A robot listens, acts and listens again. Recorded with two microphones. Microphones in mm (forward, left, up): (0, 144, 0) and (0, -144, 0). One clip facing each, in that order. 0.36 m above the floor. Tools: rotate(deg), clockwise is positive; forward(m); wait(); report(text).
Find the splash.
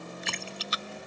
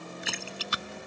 rotate(30)
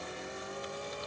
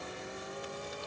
wait()
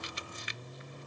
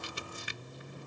report("I heard a splash, but can't make it out now. It was about 25° left or 145° right.")